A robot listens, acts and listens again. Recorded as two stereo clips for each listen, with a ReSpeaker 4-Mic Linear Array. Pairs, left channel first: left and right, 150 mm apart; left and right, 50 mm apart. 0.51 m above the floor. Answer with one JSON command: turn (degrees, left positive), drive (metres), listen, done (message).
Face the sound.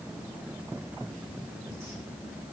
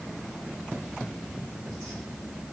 {"listen": true}
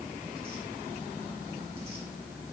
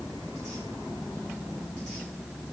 {"listen": true}
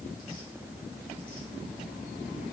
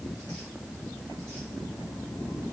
{"done": "I can't make out anything to turn to."}